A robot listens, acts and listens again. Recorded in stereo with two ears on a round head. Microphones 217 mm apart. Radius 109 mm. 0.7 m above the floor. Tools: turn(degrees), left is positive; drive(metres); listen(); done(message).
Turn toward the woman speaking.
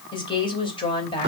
turn(degrees=20)
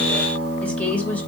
turn(degrees=30)
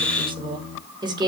turn(degrees=-20)
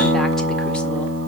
listen()
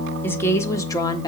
turn(degrees=15)
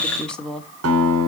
done("Found it: a woman speaking, straight ahead.")